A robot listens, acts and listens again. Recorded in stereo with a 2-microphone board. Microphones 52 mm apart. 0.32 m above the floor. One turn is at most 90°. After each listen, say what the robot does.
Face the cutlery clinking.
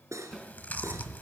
Turn 75° right.
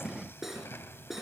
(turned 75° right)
Facing the cutlery clinking.